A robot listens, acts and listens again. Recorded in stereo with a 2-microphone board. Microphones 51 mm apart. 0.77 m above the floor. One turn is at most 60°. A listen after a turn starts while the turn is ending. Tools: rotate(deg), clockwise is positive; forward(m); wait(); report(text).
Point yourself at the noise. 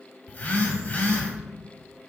rotate(-40)
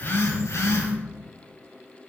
rotate(-60)
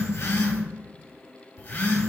rotate(-40)
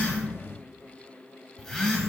report("Found it: a phone buzzing, straight ahead.")